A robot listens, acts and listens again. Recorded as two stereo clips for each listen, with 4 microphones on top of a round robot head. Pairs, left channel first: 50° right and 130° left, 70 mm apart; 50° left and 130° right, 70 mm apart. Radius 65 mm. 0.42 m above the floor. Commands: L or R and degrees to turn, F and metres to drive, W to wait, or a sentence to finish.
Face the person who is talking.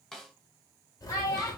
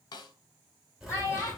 R10
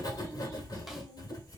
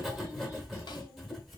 W
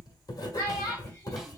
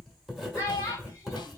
Found it: a child speaking, straight ahead.